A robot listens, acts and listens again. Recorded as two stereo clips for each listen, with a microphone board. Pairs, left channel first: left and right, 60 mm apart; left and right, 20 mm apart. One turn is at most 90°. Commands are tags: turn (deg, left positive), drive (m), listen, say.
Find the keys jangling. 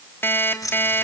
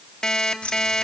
<turn deg="75"/>
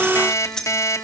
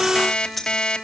<turn deg="10"/>
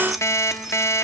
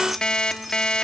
<listen/>
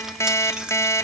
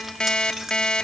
<turn deg="-15"/>
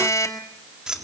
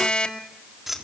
<turn deg="-15"/>
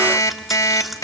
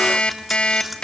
<listen/>
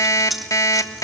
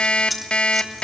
<say>Facing the keys jangling, 2 to 4 m away.</say>